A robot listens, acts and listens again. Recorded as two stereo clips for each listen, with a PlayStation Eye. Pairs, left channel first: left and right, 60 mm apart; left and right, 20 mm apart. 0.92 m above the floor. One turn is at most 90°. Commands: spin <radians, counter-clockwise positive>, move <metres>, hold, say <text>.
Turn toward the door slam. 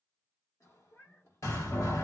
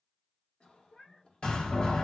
spin 1.05
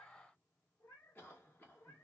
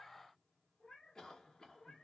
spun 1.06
hold
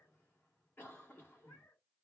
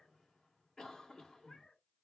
say I heard a door slam, but can't make it out now. It was about straight ahead or 55° left.